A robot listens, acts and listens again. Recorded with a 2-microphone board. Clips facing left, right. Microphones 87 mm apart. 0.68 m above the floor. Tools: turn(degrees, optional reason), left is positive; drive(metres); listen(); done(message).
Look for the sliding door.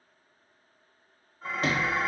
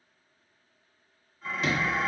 turn(degrees=50, reason="The sliding door: about 50° left or 130° left.")
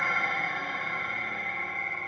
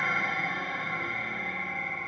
listen()
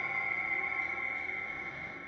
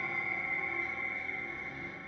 listen()
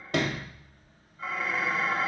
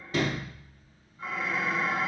turn(degrees=80, reason="So it is at 80° left.")
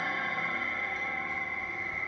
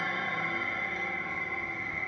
listen()
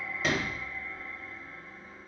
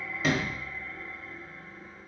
done("Found it: a sliding door, straight ahead.")